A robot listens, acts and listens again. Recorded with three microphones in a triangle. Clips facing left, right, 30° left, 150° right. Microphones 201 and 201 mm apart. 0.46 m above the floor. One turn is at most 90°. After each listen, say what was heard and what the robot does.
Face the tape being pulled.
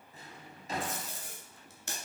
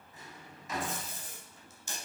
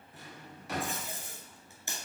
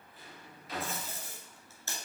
The tape being pulled: 105° left. Turn 90° left.
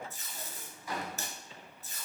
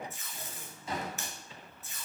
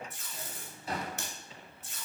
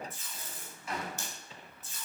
The tape being pulled is now 40° left. Turn 40° left.
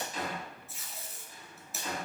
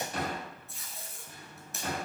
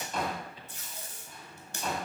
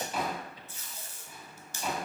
Facing the tape being pulled.